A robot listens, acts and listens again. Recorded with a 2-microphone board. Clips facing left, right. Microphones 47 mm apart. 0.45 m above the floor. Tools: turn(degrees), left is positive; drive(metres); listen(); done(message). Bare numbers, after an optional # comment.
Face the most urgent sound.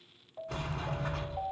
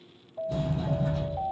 # The alarm: about 20° left or 160° left.
turn(20)
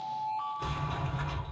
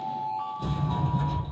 done("Found it: an alarm, straight ahead, 2 to 4 m away.")